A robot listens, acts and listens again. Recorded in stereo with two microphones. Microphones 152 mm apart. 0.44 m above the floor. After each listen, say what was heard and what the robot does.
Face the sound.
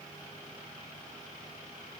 Keep listening.
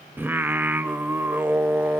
Turn 30° right.
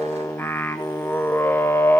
So it is at 15° left. Turn 15° left.
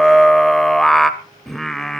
Facing the singing.